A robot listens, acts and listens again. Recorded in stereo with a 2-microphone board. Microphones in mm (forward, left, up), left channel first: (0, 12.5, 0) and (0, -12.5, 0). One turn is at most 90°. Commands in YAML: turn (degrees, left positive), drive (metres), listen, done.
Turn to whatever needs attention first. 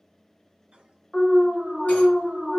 turn: -30
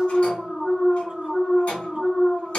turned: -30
turn: 25
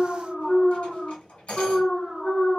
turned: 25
turn: 20
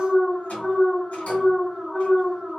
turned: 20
turn: 10
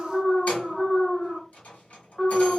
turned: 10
done: "Facing the alarm, 1 to 2 m away."